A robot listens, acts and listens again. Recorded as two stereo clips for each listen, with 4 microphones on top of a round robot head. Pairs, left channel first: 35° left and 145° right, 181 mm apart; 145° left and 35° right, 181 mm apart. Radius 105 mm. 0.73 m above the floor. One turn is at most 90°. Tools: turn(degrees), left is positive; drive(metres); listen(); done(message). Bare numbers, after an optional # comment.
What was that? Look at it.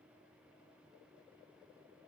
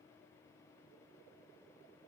listen()
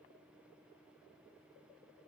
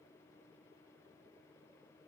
listen()
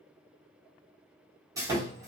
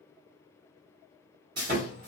# The sawing: 70° right.
turn(-70)
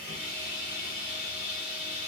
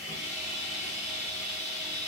done("Found it: sawing, straight ahead.")